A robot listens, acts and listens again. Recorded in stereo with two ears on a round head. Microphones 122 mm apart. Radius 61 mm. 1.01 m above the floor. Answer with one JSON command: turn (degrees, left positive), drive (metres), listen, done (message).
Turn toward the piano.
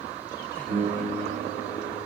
{"turn": -70}
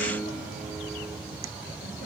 {"turn": -40}
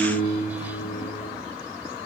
{"done": "Facing the piano, over 4 m away."}